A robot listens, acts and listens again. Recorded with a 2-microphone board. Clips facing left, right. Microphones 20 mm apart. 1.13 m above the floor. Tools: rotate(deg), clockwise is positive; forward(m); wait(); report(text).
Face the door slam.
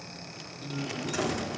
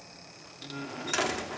rotate(50)
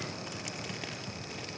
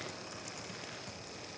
wait()
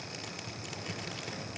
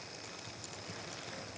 report("I heard a door slam, but can't make it out now. It was about straight ahead or 80° right.")